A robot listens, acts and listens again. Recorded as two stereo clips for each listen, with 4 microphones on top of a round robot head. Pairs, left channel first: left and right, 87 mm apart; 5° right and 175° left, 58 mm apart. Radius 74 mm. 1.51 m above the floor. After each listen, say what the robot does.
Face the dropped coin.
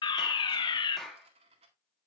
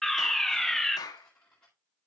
Turn 85° right.
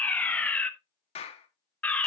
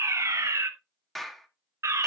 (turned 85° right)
I heard a dropped coin from this way, but can't make it out now.